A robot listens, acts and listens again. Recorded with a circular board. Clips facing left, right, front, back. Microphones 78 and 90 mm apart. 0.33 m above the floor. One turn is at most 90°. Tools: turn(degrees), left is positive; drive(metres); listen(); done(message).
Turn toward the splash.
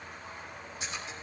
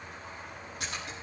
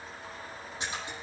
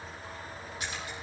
turn(degrees=-65)
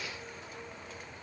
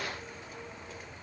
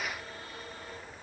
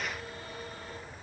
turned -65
done("Facing where the splash came from. I can't hear it now.")